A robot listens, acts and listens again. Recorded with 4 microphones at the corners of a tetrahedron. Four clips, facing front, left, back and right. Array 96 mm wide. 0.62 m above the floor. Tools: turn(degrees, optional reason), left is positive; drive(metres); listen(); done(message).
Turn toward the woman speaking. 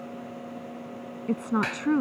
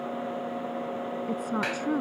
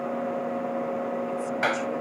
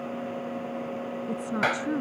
turn(degrees=15, reason="The woman speaking: 15° left.")
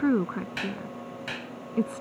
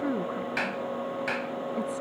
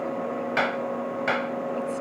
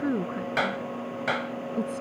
done("Facing the woman speaking.")